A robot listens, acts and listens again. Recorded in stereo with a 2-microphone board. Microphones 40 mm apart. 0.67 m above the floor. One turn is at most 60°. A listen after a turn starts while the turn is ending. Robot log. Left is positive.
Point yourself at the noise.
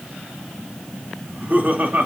note: The laughter: about 45° right or 135° right.
cmd yaw -45
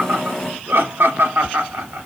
note: So it is at 90° right.
cmd yaw -60
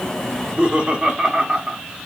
note: The laughter is now 25° right.
cmd yaw -25
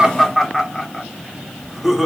end: Facing the laughter.